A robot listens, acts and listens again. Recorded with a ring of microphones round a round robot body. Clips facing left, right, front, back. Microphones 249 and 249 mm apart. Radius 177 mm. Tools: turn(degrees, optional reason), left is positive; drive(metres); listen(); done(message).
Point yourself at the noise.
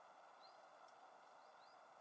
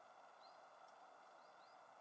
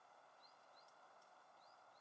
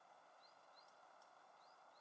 listen()
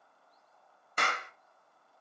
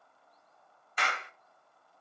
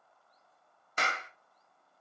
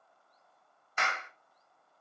turn(degrees=50, reason="The clap: 50° left.")
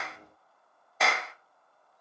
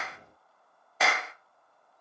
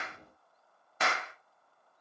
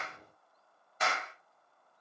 done("Facing the clap.")